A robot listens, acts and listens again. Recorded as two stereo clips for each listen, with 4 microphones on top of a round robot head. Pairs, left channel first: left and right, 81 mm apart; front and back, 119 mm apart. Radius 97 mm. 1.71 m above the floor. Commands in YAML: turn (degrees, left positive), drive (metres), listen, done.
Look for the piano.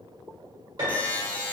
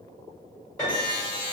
turn: -60
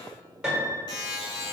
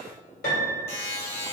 turn: -15
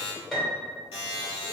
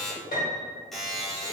done: "Found it: a piano, straight ahead."